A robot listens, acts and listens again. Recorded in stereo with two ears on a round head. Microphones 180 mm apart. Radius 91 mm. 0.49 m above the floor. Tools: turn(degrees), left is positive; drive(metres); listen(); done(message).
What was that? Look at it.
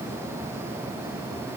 listen()
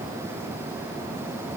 listen()
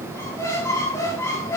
turn(degrees=30)
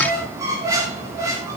turn(degrees=-15)
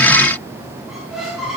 done("Facing the squeak.")